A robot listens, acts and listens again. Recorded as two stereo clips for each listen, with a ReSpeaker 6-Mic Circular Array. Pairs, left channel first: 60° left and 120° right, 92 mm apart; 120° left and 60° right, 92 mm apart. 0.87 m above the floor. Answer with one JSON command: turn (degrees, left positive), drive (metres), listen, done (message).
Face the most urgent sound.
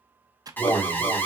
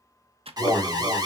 {"turn": -10}
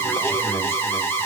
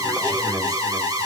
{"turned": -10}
{"done": "Found it: an alarm, straight ahead, 1 to 2 m away."}